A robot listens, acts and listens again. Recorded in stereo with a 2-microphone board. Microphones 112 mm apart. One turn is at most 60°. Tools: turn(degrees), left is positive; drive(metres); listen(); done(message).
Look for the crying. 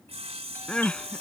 turn(degrees=30)
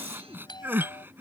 turn(degrees=-20)
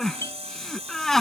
done("Facing the crying.")